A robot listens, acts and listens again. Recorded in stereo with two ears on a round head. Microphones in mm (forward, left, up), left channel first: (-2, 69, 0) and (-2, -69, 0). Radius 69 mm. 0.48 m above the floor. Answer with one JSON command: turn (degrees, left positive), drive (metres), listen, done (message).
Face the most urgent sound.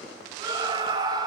{"turn": -25}
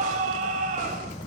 {"turn": -125}
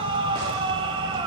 {"turn": -35}
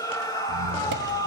{"turn": 25}
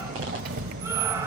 {"listen": true}
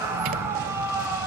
{"turn": -15}
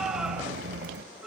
{"done": "Found it: a scream, straight ahead, 1 to 2 m away."}